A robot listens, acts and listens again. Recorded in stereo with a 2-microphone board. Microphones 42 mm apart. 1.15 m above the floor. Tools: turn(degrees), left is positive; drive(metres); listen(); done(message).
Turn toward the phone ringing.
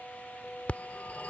turn(degrees=35)
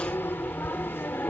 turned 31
turn(degrees=115)
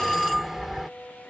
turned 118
done("Found it: a phone ringing, straight ahead.")